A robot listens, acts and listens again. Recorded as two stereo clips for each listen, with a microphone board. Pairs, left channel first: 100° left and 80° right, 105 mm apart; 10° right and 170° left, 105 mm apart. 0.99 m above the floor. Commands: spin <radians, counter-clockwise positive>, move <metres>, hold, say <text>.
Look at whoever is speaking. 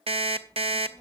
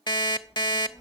spin 0.70
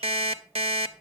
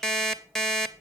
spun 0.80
say Facing the child speaking.